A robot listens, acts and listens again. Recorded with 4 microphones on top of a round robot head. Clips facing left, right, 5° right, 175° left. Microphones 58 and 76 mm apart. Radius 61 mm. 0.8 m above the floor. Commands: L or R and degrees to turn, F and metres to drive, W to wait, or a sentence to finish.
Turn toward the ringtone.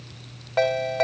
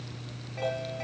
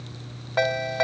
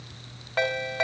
L70
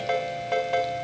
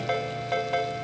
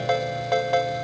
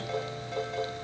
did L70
Found it: a ringtone, straight ahead.